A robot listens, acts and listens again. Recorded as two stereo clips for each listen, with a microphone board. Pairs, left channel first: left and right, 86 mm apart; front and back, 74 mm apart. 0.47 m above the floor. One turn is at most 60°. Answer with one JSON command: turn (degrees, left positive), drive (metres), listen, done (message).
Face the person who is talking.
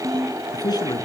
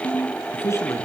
{"turn": 50}
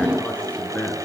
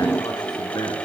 {"turn": 15}
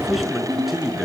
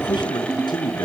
{"done": "Facing the man speaking, over 4 m away."}